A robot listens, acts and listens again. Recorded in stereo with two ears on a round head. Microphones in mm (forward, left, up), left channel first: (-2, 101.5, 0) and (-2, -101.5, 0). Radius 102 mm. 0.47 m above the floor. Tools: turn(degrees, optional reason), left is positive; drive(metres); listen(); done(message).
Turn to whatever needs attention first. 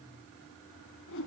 listen()
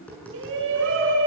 turn(degrees=-60, reason="The shout: about 60° right or 120° right.")
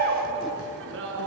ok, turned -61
turn(degrees=-55, reason="So it is at 55° right.")
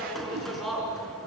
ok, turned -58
done("Found it: a shout, straight ahead, over 4 m away.")